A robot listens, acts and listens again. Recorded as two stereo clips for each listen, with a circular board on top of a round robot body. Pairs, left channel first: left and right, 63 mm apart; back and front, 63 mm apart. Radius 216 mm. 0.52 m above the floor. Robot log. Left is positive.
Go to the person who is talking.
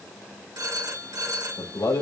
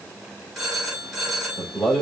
note: The man speaking: 115° left.
cmd yaw +115
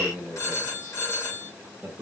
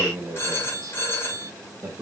note: The man speaking is now 25° right.
cmd yaw -25
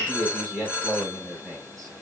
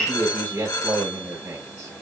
cmd fwd 1.0
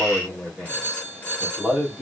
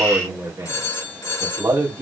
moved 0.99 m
cmd fwd 1.0
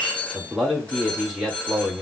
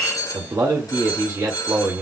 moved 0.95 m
note: The man speaking is now 10° right.
cmd yaw -10
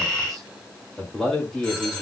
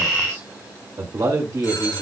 cmd fwd 1.0
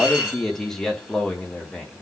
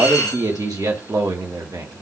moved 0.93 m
cmd fwd 1.0
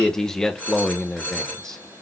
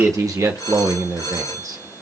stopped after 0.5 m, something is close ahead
note: The man speaking is now 10° left.
cmd yaw +10
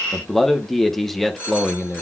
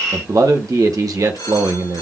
end: Arrived at the man speaking, straight ahead.